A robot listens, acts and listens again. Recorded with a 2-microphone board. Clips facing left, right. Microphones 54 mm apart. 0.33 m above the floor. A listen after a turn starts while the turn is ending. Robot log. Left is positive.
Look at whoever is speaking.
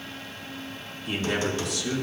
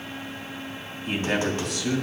note: The man speaking: about 60° right or 120° right.
cmd yaw -60
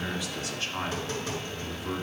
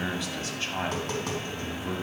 note: So it is at 40° right.
cmd yaw -40
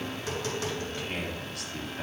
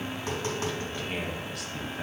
end: Found it: a man speaking, straight ahead.